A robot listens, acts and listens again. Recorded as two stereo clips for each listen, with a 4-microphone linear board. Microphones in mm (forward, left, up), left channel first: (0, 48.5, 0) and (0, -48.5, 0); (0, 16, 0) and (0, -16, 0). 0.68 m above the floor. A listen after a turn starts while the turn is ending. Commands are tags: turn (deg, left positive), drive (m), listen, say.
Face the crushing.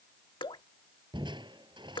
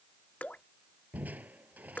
<turn deg="-55"/>
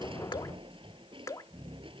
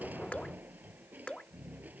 <turn deg="-70"/>
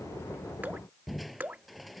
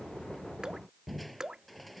<say>Found it: crushing, straight ahead.</say>